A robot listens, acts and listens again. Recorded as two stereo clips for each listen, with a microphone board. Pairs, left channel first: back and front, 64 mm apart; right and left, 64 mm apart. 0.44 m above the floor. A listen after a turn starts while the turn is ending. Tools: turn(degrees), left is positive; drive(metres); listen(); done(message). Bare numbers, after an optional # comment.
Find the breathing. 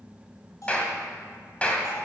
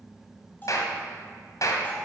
listen()
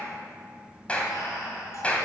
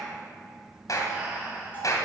# The breathing: 165° left.
turn(165)
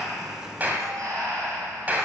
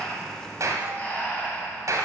# The breathing is now 25° right.
turn(-25)
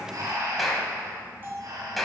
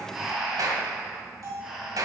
done("Facing the breathing, 2 to 4 m away.")